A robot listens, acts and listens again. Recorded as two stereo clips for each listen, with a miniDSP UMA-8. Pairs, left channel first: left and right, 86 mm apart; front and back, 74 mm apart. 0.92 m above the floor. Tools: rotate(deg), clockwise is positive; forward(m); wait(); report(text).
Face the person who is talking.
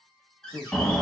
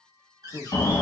rotate(30)
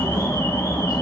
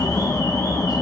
wait()
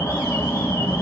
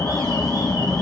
wait()
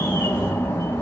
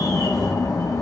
report("I heard a man speaking from this way, but can't make it out now.")